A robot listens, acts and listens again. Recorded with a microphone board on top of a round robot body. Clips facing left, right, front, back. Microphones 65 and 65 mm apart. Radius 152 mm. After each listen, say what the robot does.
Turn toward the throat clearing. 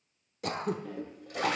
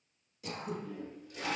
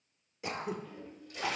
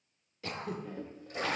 Turn 75° left.
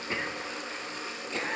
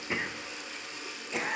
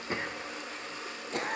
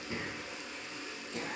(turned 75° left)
Turn 10° right.
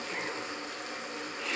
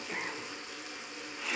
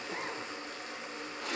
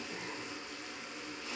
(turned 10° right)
Facing the throat clearing.